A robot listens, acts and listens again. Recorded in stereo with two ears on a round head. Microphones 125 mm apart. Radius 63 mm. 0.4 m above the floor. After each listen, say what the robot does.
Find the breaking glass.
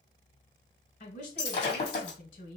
Turn 45° left.
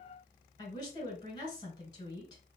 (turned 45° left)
Keep listening.
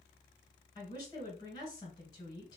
I heard breaking glass, but can't make it out now. It was about straight ahead or 90° left.